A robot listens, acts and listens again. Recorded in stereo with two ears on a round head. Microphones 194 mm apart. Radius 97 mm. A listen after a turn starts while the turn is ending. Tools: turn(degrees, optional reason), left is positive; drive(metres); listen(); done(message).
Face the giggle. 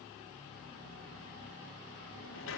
listen()
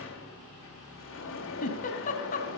turn(degrees=40, reason="The giggle: about 40° left or 140° left.")
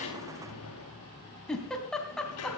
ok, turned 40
done("Facing the giggle.")